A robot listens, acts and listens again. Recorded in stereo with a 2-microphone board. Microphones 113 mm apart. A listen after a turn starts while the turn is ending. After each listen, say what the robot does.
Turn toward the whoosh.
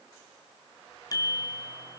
Keep listening.
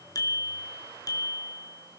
Keep listening.
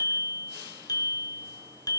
I can't make out a whoosh to turn to.